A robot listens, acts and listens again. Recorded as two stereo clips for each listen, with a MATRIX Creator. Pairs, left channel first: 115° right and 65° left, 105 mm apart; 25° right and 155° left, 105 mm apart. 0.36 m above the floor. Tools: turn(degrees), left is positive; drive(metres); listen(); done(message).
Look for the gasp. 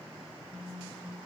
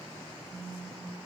listen()
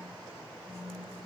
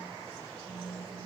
listen()
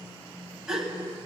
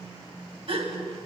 turn(degrees=150)
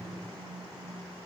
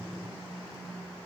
done("Facing where the gasp came from. I can't hear it now.")